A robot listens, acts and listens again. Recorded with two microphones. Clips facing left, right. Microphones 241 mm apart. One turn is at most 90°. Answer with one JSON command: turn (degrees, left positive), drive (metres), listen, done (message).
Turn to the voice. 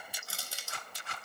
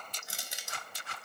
{"listen": true}
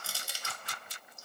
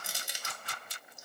{"listen": true}
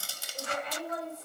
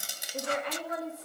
{"turn": -75}
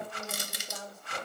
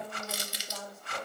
{"done": "Facing the woman speaking."}